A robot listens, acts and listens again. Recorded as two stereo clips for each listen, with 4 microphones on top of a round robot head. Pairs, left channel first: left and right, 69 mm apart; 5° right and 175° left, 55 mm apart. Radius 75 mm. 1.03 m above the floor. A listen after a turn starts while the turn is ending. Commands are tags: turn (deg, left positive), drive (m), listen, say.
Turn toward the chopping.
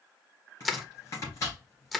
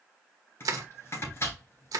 <turn deg="35"/>
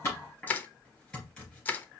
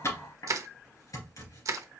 <turn deg="10"/>
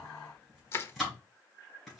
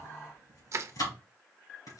<say>Found it: chopping, straight ahead.</say>